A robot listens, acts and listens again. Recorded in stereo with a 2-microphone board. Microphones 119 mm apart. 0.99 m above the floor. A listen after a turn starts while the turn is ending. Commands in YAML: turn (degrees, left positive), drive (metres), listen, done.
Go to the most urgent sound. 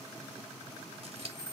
listen: true
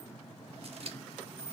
listen: true
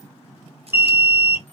turn: -20
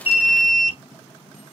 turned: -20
drive: 1.0
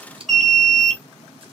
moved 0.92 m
drive: 1.0
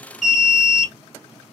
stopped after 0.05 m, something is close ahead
done: "Arrived at the alarm, straight ahead."